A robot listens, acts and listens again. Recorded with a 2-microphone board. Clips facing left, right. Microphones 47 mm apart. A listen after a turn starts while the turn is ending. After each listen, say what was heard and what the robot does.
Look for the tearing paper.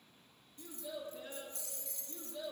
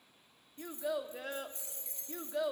Keep listening.
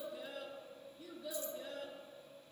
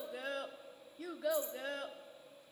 Keep listening.
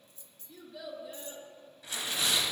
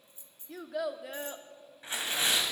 The tearing paper: about 35° right or 145° right. Turn 35° right.
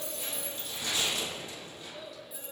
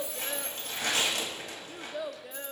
So it is at 110° right. Turn 110° right.
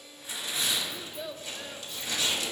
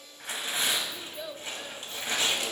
The tearing paper is now 40° right. Turn 40° right.
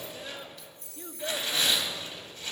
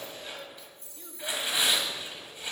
The tearing paper is now 15° right. Turn 15° right.
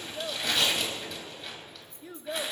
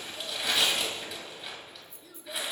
Facing the tearing paper, 2 to 4 m away.